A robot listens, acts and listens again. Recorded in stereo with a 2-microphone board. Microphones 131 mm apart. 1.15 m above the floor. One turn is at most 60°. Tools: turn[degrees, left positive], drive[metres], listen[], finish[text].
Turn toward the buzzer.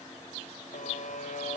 Action: turn[60]
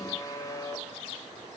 Thought: So it is at 30° left.
Action: turn[30]
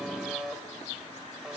Action: finish[Found it: a buzzer, straight ahead.]